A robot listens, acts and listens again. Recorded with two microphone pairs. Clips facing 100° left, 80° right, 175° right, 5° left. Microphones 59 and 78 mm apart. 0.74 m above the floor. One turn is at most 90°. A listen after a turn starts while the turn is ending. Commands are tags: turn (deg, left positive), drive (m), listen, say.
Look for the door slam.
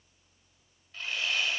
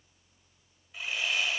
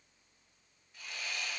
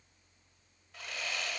<listen/>
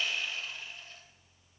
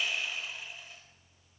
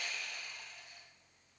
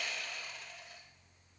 <listen/>
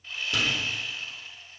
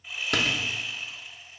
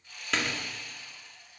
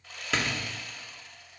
<turn deg="-85"/>
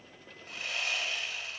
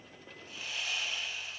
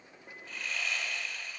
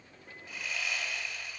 <say>Facing where the door slam came from. I can't hear it now.</say>